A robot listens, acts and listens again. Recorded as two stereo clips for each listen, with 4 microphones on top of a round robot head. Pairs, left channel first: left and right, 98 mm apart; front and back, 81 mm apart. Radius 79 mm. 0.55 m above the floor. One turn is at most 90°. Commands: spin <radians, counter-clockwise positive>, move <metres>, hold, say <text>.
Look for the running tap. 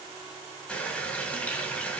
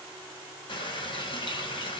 spin 0.26
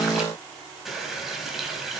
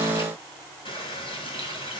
say Found it: a running tap, straight ahead, 2 to 4 m away.